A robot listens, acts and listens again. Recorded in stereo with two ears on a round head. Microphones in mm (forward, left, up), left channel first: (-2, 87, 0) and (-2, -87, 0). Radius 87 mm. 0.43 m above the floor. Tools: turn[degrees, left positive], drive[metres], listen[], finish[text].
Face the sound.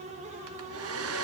Action: turn[-90]
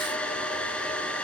Action: finish[Facing the hair dryer, 1 to 2 m away.]